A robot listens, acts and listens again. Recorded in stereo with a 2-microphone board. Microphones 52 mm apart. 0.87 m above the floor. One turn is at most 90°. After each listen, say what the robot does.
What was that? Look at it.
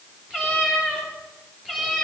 Turn 30° right.
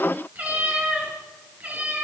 Turn 90° right.
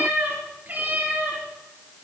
Turn 35° right.
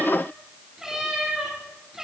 Facing the cat meowing, over 4 m away.